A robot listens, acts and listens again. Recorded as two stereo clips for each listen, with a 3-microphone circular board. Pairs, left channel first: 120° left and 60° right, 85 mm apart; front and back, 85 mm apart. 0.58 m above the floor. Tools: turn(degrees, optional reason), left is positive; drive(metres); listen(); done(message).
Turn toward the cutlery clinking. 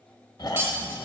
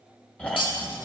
done("Facing the cutlery clinking.")